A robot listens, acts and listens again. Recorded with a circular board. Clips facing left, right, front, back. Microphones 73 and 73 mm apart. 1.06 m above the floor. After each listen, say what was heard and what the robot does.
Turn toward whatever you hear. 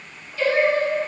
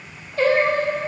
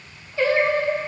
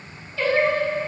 The singing: 65° right. Turn 65° right.
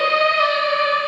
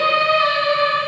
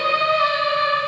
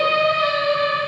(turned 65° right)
The singing is now 20° left. Turn 20° left.
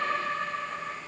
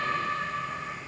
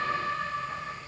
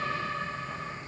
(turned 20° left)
Found it: singing, straight ahead, 1 to 2 m away.